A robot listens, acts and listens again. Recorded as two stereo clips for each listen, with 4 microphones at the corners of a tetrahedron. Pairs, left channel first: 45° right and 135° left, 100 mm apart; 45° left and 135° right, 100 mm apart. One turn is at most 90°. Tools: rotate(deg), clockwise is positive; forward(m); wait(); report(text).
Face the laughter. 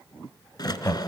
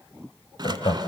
rotate(-20)
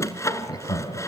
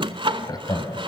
report("Facing the laughter.")